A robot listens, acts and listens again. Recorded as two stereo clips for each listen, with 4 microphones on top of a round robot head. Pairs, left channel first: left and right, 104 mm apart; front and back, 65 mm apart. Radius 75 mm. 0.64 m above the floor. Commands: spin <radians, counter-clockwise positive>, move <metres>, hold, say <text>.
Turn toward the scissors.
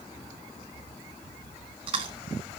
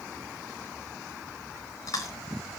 hold
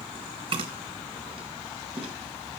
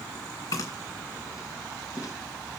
hold
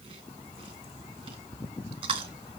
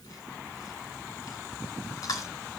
say I can't make out scissors, only chewing.